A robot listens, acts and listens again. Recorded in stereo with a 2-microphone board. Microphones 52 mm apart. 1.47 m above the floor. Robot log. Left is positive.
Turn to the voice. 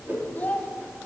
note: The child speaking: about 35° left or 145° left.
cmd yaw +35
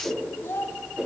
note: So it is at 105° left.
cmd yaw +105
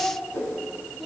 end: Found it: a child speaking, straight ahead, 1 to 2 m away.